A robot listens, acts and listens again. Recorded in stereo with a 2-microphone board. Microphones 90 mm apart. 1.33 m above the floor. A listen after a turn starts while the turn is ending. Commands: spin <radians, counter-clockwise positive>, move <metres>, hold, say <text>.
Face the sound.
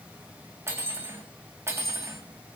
spin -0.52
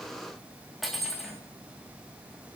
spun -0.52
say Facing the cutlery clinking.